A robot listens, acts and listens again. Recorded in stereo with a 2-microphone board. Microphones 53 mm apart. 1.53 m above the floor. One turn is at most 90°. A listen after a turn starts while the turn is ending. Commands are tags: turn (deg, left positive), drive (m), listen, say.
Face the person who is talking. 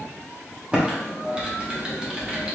<listen/>
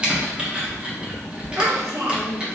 <turn deg="-60"/>
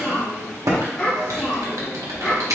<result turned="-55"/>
<turn deg="15"/>
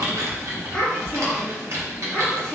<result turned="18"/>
<say>Facing the child speaking, 1 to 2 m away.</say>